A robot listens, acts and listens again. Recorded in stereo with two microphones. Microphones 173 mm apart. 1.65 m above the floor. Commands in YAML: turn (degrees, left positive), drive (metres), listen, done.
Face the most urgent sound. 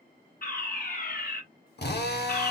turn: 55
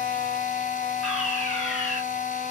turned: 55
done: "Found it: a fire alarm, straight ahead, 2 to 4 m away."